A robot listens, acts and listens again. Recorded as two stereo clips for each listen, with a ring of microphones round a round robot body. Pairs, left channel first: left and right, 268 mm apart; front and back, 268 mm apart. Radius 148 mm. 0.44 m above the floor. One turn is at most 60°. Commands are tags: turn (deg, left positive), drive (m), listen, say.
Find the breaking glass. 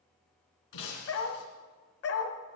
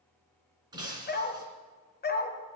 <turn deg="60"/>
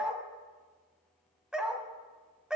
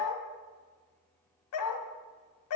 <turn deg="45"/>
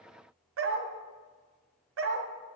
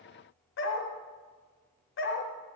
<say>I heard breaking glass from this way, but can't make it out now.</say>